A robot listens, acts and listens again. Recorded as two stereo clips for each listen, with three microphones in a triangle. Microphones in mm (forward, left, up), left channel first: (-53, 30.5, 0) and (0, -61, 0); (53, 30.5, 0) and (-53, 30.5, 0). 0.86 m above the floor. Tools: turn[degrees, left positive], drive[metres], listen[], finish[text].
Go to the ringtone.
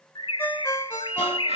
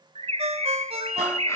Thought: The ringtone: 170° right.
Action: turn[-170]
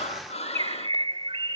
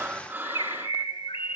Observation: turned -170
Action: listen[]
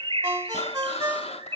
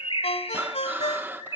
Action: drive[1.0]
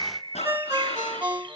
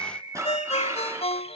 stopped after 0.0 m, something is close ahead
Thought: The ringtone is now 10° left.
Action: turn[10]
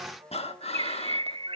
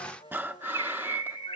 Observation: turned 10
Action: listen[]
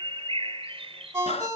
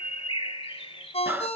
Action: finish[Something is in my way. I am facing the ringtone but have not reached it.]